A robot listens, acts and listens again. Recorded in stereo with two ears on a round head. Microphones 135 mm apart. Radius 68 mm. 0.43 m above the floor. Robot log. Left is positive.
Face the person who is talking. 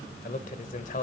note: The man speaking: about 50° left or 130° left.
cmd yaw +50
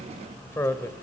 note: So it is at 20° left.
cmd yaw +20
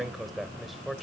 end: Facing the man speaking.